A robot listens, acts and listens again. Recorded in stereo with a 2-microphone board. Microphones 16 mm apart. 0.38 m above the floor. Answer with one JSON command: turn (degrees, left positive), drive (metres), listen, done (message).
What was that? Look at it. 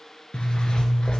{"turn": 70}
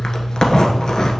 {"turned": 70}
{"turn": 40}
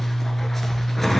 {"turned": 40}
{"turn": 10}
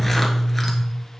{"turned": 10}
{"done": "Facing the zipper."}